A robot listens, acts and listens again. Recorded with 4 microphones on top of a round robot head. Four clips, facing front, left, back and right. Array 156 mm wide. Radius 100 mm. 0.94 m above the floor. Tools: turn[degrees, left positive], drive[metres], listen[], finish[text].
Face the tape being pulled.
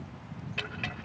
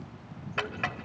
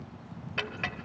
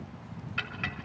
Action: listen[]
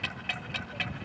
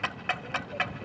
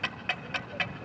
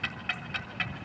Action: listen[]
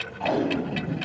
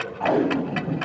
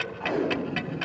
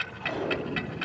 Thought: The tape being pulled: 70° left.
Action: turn[70]
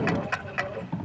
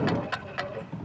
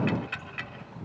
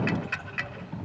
Action: finish[Facing the tape being pulled, 2 to 4 m away.]